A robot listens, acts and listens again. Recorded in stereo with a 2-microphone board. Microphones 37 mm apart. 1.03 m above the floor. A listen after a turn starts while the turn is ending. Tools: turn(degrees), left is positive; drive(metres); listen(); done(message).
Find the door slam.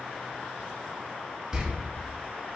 turn(degrees=-15)
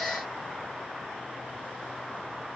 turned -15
listen()
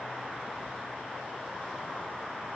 done("I heard a door slam, but can't make it out now. It was about straight ahead or 150° right.")